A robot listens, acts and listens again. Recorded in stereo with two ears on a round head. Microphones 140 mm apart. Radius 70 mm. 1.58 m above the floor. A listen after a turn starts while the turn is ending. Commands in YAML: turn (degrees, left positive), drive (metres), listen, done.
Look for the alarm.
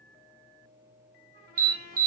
turn: -60
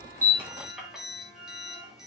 listen: true
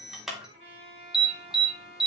done: "Facing the alarm, 2 to 4 m away."